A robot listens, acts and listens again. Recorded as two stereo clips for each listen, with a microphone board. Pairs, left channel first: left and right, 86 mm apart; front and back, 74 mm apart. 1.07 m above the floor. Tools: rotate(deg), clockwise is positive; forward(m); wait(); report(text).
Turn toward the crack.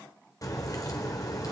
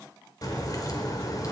rotate(-40)
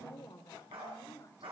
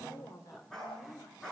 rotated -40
report("Facing where the crack came from. I can't hear it now.")